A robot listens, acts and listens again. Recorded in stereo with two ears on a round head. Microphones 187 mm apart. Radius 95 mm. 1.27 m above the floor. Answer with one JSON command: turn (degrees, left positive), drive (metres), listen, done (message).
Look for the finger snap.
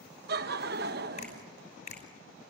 {"turn": 40}
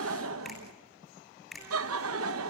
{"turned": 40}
{"done": "Found it: a finger snap, straight ahead, over 4 m away."}